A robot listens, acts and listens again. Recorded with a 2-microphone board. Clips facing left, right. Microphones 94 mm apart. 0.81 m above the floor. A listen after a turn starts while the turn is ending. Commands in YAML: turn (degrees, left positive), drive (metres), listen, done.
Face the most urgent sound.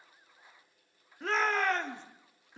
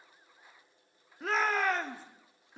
turn: -30
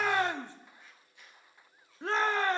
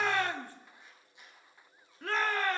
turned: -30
turn: 25
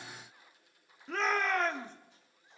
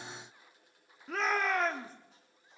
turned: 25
done: "Facing the shout, 1 to 2 m away."